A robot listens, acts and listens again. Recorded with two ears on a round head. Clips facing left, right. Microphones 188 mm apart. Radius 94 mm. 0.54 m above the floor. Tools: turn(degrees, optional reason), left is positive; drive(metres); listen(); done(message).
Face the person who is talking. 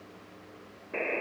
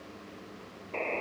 listen()
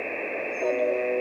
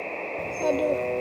turn(degrees=-70, reason="The child speaking: about 70° right or 110° right.")
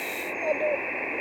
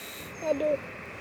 turn(degrees=-40, reason="So it is at 40° right.")
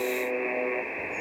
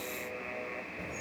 listen()
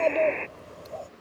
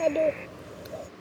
turn(degrees=-20, reason="The child speaking is now 20° right.")
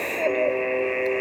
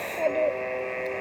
listen()
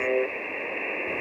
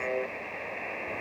listen()
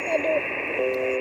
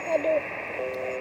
done("Facing where the child speaking came from. I can't hear it now.")